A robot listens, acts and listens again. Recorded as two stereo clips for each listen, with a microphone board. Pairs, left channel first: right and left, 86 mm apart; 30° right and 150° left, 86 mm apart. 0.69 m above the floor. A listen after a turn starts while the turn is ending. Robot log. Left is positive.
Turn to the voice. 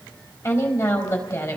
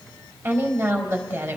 note: The woman speaking: 140° right.
cmd yaw -140
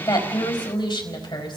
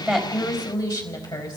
note: The woman speaking is now 65° right.
cmd yaw -65
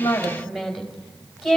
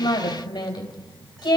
end: Facing the woman speaking.